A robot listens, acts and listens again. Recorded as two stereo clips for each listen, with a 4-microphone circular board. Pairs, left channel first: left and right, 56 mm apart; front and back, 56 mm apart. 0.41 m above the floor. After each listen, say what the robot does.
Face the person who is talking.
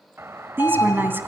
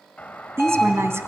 Turn 140° right.
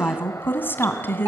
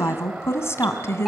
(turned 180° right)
Turn 40° left.
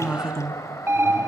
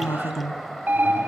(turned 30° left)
Turn 10° left.
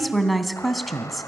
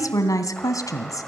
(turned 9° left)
Found it: a woman speaking, straight ahead.